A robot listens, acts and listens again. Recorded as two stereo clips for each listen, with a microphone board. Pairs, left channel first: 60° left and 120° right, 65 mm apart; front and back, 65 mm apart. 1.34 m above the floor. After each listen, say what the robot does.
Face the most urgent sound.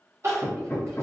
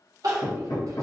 Turn 165° right.
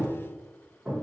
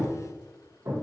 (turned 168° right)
Keep listening.
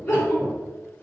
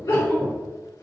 Found it: crying, straight ahead.